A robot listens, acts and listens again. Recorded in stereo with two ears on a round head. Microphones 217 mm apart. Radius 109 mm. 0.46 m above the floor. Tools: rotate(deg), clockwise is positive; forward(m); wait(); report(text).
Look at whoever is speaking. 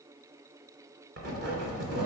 wait()
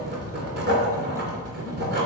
wait()
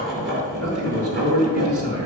rotate(70)
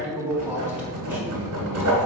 report("Facing the man speaking.")